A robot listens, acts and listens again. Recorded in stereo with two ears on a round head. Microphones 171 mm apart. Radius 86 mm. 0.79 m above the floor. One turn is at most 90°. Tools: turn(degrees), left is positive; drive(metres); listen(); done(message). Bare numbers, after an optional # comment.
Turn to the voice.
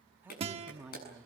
turn(-30)
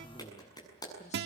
listen()
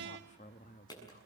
# So it is at 45° left.
turn(45)
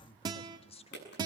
# The woman speaking is now 35° left.
turn(35)
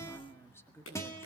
# The woman speaking is now 15° left.
turn(15)
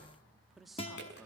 done("Facing the woman speaking.")